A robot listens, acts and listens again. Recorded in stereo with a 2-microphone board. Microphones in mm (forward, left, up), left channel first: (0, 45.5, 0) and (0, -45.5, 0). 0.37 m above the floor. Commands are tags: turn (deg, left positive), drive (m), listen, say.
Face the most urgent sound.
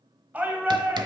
<turn deg="-15"/>
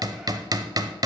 <listen/>
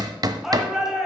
<say>Facing the shout, 2 to 4 m away.</say>